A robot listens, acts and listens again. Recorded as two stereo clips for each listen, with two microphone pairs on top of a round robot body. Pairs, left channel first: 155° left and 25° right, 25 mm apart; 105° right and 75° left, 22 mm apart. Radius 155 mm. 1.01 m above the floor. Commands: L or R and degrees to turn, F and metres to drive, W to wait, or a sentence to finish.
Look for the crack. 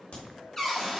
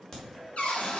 R175
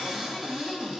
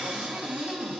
Facing where the crack came from. I can't hear it now.